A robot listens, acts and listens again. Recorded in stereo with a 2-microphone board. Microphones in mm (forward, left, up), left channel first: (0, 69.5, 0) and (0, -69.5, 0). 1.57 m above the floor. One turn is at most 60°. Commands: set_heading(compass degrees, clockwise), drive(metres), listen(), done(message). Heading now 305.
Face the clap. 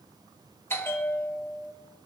listen()
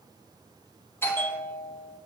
listen()
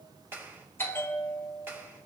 set_heading(335)
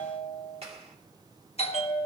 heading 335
set_heading(35)
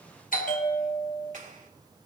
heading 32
set_heading(92)
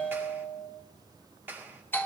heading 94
set_heading(109)
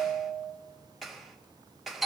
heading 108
done("Facing the clap, 2 to 4 m away.")